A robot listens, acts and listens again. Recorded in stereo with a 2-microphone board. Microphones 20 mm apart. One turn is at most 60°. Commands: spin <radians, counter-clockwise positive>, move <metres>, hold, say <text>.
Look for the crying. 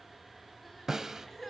spin 0.52
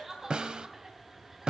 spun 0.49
spin -0.35
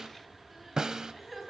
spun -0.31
say Facing the crying.